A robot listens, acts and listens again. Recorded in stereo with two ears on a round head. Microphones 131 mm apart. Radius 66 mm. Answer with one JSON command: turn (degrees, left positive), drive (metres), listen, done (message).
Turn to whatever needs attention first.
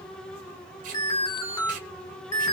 {"turn": 25}
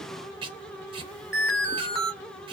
{"done": "Found it: an alarm, straight ahead."}